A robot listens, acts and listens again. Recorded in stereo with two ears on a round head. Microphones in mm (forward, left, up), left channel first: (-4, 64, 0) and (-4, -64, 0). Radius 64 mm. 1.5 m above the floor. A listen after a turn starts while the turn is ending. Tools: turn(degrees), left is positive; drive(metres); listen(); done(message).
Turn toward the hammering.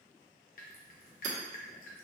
turn(degrees=-50)
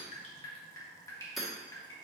done("Facing the hammering, 1 to 2 m away.")